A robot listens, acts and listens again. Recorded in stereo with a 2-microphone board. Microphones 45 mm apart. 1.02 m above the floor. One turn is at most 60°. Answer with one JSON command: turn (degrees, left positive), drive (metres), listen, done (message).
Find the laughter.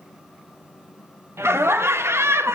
{"turn": -60}
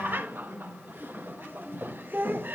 {"turn": -50}
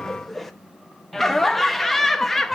{"done": "Found it: laughter, straight ahead, 1 to 2 m away."}